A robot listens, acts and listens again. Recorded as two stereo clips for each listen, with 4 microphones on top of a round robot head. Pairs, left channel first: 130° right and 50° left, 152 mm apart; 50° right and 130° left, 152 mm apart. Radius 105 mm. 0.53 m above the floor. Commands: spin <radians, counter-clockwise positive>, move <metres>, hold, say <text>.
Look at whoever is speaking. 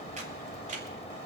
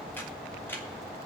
hold
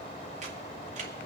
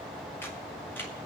hold
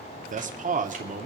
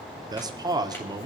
spin 1.22
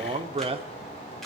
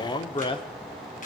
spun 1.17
say Facing the man speaking.